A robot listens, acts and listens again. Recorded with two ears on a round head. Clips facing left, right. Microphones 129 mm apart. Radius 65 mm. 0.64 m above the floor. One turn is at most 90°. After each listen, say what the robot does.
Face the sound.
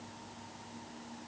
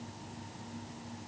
Keep listening.
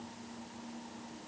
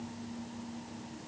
Keep listening.
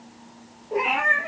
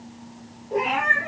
Turn 30° left.
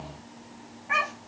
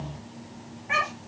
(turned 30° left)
Turn 30° right.
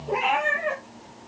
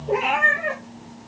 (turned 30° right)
Turn 10° right.
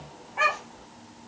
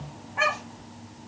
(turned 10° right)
Found it: a cat meowing, straight ahead, over 4 m away.